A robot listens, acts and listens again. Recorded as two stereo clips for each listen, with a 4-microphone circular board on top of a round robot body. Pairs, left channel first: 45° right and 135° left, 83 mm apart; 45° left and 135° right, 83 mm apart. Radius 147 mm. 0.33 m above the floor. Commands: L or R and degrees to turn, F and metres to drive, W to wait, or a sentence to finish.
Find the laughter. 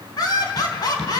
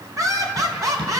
R85
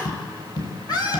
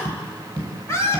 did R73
R10
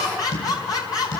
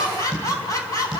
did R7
Found it: laughter, straight ahead.